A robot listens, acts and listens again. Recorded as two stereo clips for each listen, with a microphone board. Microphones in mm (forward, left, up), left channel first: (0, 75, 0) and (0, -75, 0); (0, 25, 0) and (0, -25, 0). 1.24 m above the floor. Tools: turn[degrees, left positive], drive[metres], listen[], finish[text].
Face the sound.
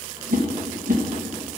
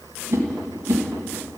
Thought: The whoosh: about 65° right or 115° right.
Action: turn[-65]
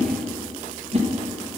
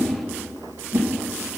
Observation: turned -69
Thought: So it is at 45° right.
Action: turn[-45]
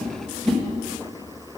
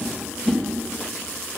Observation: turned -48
Action: finish[Found it: a whoosh, straight ahead, 1 to 2 m away.]